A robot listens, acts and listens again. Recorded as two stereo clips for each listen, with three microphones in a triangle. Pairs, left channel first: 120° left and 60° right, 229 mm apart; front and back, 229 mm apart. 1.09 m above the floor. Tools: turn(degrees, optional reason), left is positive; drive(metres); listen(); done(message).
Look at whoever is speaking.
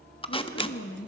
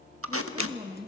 turn(degrees=110, reason="The woman speaking: 110° left.")
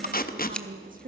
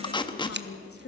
done("Found it: a woman speaking, straight ahead, 1 to 2 m away.")